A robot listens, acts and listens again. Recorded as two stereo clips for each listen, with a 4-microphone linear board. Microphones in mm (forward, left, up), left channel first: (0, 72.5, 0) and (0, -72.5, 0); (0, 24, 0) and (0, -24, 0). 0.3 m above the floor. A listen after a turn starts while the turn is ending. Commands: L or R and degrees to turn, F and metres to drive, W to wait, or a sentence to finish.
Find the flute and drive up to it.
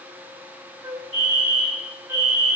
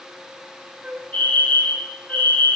R20
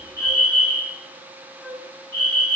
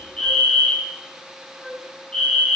F1.0
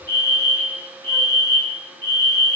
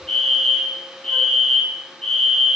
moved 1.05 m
W
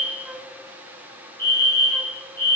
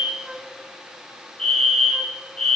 W
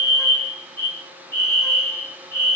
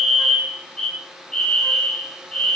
Facing where the flute came from. I can't hear it now. I did not reach it.